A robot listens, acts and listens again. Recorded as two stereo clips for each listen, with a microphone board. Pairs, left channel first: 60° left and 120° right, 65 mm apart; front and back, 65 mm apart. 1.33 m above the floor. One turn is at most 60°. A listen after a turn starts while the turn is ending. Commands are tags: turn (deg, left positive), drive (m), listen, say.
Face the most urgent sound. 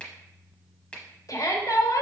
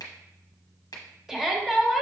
<turn deg="60"/>
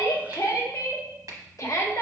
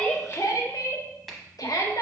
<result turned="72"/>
<turn deg="20"/>
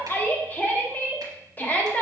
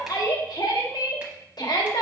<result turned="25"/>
<say>Found it: a shout, straight ahead.</say>